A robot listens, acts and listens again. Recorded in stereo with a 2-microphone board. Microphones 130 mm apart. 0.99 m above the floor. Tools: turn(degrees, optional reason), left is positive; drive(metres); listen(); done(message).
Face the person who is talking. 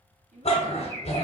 turn(degrees=-70, reason="The child speaking: about 70° right or 110° right.")
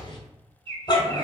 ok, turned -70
listen()
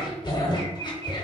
listen()
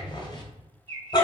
done("I heard a child speaking, but can't make it out now. It was about straight ahead or 40° right.")